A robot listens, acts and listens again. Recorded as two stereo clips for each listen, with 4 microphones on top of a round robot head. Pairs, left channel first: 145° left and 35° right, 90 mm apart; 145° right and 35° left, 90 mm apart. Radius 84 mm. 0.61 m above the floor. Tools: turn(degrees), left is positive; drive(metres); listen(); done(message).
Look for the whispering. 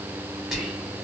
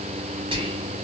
turn(degrees=55)
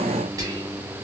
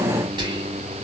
turn(degrees=15)
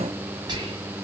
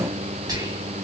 done("Found it: whispering, straight ahead.")